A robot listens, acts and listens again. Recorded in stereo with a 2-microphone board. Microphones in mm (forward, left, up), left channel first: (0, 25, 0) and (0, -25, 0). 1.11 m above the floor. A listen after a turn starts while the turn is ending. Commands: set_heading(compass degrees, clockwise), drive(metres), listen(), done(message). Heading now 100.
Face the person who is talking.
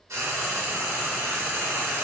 listen()
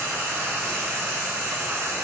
listen()
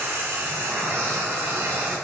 done("I can't make out anyone speaking to turn to.")